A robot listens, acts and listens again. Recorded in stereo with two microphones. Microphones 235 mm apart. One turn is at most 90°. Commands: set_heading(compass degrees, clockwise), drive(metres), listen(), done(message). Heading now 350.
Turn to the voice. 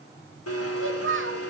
set_heading(45)
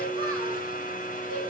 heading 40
listen()
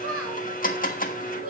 set_heading(115)
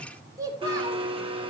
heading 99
set_heading(114)
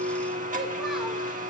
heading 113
listen()
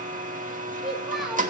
done("Found it: a child speaking, straight ahead.")